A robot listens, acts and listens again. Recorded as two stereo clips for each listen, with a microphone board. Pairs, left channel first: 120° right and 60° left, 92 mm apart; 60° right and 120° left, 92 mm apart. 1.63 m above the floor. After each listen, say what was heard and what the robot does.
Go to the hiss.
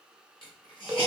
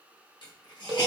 The hiss: 95° right. Turn 95° right.
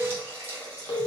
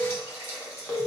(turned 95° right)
Drive 1.0 m forward.
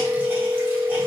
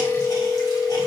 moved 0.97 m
Keep listening.
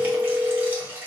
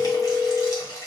The hiss is now 10° right. Turn 10° right.
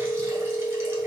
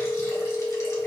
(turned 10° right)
Keep listening.
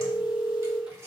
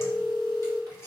Drive 1.0 m forward.
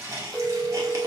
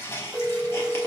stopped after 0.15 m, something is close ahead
I am next to the hiss.